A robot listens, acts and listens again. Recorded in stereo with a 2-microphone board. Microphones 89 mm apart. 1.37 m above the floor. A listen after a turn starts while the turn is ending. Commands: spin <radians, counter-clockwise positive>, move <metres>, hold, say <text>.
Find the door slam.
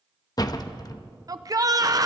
spin 0.79
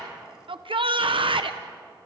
hold
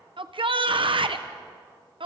say I heard a door slam, but can't make it out now. It was about straight ahead or 90° left.